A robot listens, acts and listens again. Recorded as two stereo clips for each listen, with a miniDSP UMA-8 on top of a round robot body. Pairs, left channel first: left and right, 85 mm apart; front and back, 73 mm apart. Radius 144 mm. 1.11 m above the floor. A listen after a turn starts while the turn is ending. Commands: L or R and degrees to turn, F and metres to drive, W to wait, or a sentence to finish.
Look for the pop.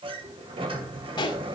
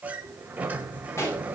L55
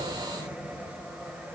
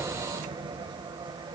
I heard a pop from this way, but can't make it out now.